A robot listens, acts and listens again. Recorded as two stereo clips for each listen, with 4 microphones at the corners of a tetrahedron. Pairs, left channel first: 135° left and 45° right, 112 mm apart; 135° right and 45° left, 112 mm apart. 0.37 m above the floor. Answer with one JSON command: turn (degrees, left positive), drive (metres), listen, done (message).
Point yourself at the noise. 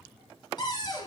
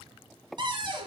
{"turn": 90}
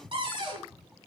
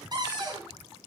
{"done": "Facing the cupboard door."}